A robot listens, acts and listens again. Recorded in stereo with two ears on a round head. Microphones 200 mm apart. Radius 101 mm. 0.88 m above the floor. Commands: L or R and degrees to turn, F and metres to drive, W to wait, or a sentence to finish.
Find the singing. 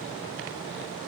W
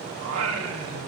R60
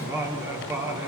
R10
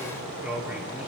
Facing the singing, 2 to 4 m away.